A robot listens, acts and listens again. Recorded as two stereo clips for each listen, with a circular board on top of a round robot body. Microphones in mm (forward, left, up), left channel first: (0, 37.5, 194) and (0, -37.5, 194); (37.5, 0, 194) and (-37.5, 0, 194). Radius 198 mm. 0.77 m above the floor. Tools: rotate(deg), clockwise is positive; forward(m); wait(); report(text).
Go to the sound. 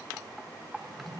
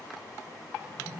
rotate(125)
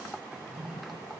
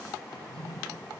rotate(10)
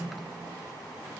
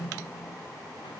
forward(1.0)
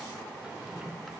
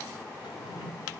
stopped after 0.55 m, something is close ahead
rotate(10)
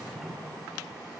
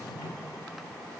report("Something is in my way. I am facing the drawer but have not reached it.")